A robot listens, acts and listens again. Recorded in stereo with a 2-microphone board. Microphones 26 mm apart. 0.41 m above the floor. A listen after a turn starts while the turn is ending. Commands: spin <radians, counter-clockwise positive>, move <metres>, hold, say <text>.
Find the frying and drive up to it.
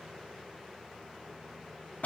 hold
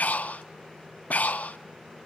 hold
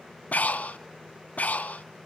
say I can't make out frying, only breathing.